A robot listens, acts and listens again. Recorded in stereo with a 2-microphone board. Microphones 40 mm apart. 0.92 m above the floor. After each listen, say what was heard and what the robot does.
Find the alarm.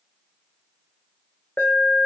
The alarm: about 60° left or 120° left. Turn 60° left.
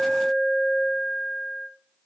Facing the alarm.